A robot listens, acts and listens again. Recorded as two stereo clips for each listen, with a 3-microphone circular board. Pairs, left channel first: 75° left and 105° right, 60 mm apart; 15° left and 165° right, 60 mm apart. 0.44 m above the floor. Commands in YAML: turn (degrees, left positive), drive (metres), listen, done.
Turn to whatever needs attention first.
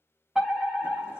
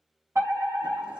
turn: 170
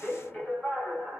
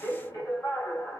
done: "Facing the fire alarm."